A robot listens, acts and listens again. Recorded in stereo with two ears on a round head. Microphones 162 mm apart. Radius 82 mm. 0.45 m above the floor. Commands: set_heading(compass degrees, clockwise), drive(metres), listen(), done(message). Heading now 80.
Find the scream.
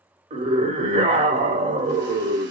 set_heading(115)
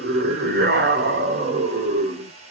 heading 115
set_heading(220)
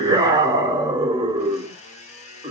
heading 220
set_heading(245)
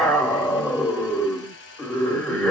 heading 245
done("Facing the scream.")